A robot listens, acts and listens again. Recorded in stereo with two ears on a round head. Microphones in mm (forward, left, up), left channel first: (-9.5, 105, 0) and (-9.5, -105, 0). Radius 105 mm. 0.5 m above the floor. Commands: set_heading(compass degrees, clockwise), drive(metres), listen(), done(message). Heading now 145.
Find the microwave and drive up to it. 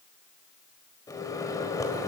set_heading(115)
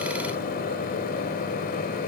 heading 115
set_heading(340)
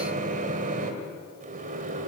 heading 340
set_heading(15)
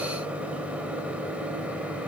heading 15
drive(1.0)
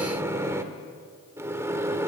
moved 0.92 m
set_heading(30)
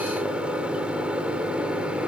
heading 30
drive(1.0)
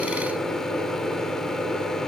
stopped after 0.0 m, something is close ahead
done("I am next to the microwave.")